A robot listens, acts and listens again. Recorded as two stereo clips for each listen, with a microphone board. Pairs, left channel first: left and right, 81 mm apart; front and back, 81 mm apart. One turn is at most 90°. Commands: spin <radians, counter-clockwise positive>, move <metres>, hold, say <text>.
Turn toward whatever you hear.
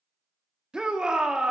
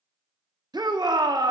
spin -1.57
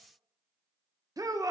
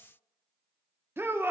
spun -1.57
spin -1.57
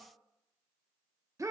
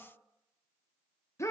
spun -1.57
spin -0.87
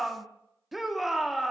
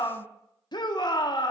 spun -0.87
say Found it: a shout, straight ahead.